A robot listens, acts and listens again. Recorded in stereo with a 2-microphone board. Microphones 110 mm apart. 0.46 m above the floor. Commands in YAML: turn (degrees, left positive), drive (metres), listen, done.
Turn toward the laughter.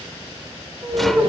turn: -20
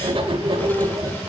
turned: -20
listen: true
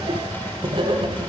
listen: true
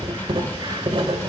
done: "I heard laughter, but can't make it out now. It was about straight ahead or 140° right."